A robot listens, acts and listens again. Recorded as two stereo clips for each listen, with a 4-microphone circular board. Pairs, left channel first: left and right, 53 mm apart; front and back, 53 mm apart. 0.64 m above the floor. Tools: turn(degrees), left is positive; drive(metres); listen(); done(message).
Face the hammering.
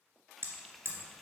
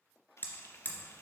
turn(degrees=-50)
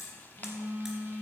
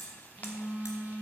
listen()
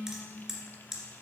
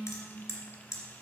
turn(degrees=-10)
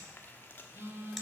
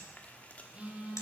listen()
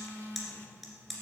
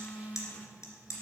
done("Facing the hammering.")